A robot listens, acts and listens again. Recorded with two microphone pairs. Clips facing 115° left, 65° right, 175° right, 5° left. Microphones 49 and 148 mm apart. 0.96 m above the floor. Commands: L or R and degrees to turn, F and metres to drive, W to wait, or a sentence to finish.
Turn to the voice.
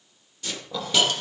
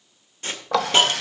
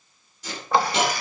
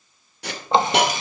W
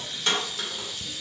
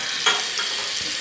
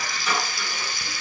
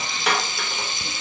W
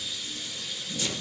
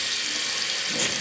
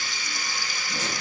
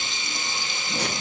I can't make out anyone speaking to turn to.